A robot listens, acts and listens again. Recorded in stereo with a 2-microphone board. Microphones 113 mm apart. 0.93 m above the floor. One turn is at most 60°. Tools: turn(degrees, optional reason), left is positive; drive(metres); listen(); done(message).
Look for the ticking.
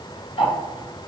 turn(degrees=55, reason="The ticking: about 55° left or 125° left.")
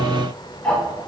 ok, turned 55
turn(degrees=10, reason="So it is at 10° left.")
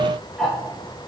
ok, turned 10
done("Found it: ticking, straight ahead, 1 to 2 m away.")